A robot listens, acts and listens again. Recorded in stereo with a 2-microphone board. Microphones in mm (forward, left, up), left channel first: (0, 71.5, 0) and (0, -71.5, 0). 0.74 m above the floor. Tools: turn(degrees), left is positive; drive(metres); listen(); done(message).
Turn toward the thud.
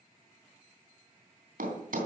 turn(degrees=-90)
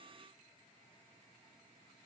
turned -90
done("Facing where the thud came from. I can't hear it now.")